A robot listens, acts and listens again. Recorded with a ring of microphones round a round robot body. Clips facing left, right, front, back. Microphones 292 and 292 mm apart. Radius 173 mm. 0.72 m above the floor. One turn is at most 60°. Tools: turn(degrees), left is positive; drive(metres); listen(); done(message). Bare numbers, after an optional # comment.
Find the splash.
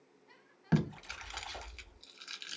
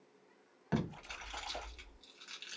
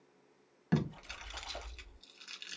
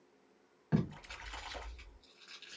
# The splash: 170° left.
turn(60)
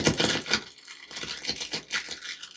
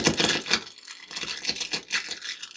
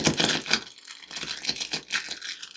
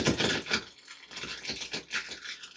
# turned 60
# Nothing new. It was at 110° left.
turn(60)
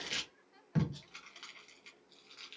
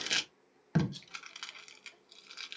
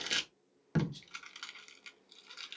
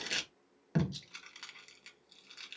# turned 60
# Nothing new. It was at 50° left.
turn(50)
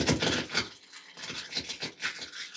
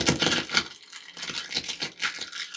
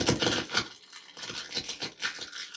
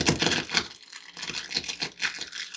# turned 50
done("I heard a splash from this way, but can't make it out now.")